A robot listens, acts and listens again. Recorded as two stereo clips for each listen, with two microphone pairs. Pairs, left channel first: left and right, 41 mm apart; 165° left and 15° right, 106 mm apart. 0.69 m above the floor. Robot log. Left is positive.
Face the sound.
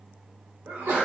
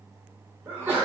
note: The sneeze: 80° right.
cmd yaw -80
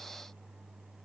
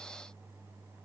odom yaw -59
note: Nothing new. It was at 20° right.
cmd yaw -20
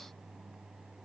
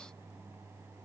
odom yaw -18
end: I heard a sneeze from this way, but can't make it out now.